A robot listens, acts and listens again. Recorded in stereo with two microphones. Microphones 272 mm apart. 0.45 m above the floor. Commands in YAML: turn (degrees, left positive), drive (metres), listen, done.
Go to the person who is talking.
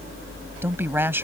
turn: -30
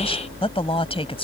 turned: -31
turn: 20
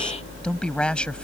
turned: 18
drive: 1.0
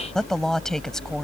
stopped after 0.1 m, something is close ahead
done: "Blocked. The woman speaking is further on, straight ahead."